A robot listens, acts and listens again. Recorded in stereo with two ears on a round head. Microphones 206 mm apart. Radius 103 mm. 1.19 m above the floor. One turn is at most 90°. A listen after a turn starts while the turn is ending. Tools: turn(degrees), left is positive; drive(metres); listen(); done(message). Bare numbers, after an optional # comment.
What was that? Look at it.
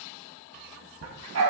# The dog barking: about 70° right or 110° right.
turn(-70)
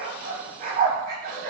# So it is at 45° right.
turn(-45)
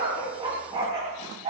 # The dog barking is now 30° right.
turn(-30)
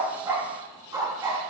# The dog barking is now 20° right.
turn(-20)
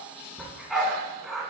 done("Facing the dog barking.")